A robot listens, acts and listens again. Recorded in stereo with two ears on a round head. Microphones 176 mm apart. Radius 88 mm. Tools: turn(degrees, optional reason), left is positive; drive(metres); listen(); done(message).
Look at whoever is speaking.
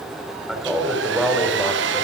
turn(degrees=30)
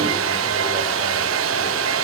listen()
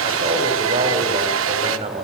turn(degrees=-35, reason="So it is at 35° right.")
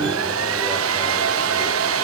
listen()
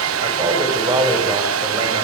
turn(degrees=-20, reason="The man speaking is now 20° right.")
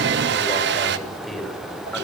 done("Found it: a man speaking, straight ahead.")